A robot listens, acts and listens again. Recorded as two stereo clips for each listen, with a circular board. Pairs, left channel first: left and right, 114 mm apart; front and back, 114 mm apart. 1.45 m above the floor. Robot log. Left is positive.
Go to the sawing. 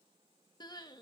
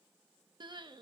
cmd idle
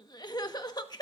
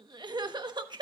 cmd idle
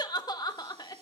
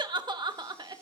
end: I can't make out sawing to turn to.